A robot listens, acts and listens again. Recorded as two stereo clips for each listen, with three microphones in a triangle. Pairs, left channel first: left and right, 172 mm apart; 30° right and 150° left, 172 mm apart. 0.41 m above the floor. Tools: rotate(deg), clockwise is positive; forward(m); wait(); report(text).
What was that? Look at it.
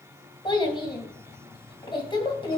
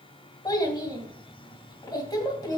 rotate(-30)
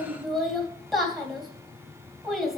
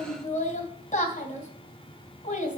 report("Found it: a child speaking, straight ahead, 2 to 4 m away.")